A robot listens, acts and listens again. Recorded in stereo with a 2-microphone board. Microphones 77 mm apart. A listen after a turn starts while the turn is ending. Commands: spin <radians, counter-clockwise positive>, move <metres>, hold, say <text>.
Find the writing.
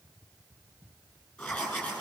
spin 0.52
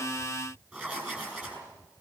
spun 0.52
spin -0.35
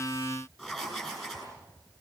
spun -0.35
say Facing the writing, over 4 m away.